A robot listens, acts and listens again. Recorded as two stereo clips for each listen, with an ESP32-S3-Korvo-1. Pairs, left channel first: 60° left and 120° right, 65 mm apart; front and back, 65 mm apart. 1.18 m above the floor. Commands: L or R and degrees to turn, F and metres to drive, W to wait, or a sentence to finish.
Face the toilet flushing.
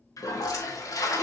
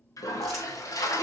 L30
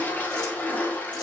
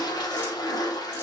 Facing the toilet flushing, 1 to 2 m away.